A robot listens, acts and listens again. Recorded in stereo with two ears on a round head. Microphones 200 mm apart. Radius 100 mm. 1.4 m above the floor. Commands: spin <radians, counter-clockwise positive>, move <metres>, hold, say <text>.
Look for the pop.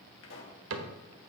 spin 1.05
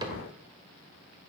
hold
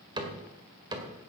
say I heard a pop, but can't make it out now. It was about straight ahead or 60° left.